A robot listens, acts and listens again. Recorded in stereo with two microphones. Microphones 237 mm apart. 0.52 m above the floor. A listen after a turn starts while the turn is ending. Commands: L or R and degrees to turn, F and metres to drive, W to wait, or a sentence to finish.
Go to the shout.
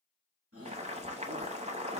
R75
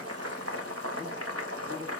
W
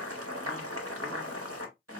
W
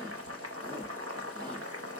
I heard a shout, but can't make it out now. It was about straight ahead or 30° right. I did not reach it.